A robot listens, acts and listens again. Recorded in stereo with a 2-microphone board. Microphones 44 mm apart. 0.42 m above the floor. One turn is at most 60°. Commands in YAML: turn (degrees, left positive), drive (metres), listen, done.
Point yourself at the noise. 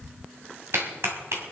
turn: -60
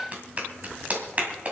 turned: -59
turn: -35
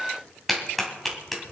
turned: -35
done: "Facing the clap, 2 to 4 m away."